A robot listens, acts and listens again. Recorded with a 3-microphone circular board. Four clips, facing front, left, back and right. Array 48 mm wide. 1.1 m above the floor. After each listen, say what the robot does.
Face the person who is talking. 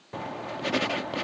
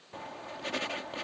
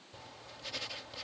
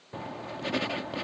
Keep listening.
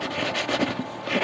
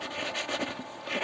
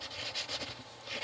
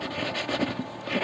Keep listening.
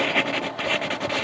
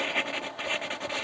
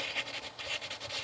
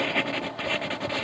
I can't make out anyone speaking to turn to.